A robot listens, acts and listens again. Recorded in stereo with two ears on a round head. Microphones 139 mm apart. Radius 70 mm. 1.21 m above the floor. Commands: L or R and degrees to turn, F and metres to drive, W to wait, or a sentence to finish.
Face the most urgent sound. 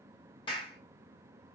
W
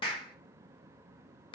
W
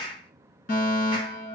L60
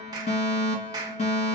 L45
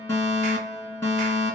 L20
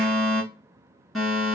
Found it: a fire alarm, straight ahead, 2 to 4 m away.